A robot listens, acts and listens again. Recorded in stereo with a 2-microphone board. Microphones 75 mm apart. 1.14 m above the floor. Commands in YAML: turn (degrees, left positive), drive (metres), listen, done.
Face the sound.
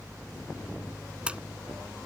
turn: -30
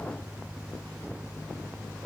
listen: true
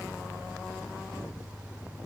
done: "I heard a splash, but can't make it out now. It was about 15° left or 135° right."